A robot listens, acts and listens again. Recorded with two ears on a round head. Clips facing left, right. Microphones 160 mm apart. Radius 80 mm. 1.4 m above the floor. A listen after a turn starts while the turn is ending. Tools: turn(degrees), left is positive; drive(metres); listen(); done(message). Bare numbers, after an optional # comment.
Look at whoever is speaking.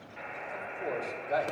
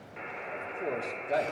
# The man speaking: about 25° right or 155° right.
turn(-25)
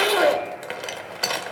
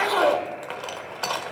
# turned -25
listen()
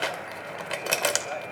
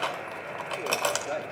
# So it is at 125° right.
turn(-125)
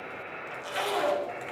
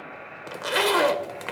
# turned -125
listen()
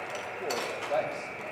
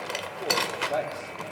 done("Found it: a man speaking, straight ahead, 2 to 4 m away.")